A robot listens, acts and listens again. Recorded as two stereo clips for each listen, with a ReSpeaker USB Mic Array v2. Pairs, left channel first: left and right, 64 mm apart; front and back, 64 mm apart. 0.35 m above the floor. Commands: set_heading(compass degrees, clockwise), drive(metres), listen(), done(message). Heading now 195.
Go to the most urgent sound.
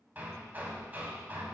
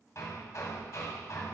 listen()
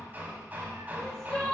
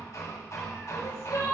set_heading(185)
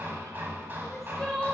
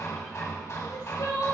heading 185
drive(1.0)
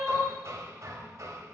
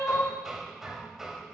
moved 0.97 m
drive(1.0)
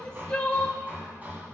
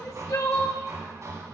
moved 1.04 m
set_heading(170)
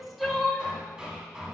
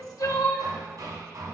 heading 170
drive(1.0)
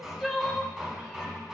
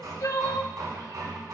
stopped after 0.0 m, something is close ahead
done("Arrived at the crying, straight ahead.")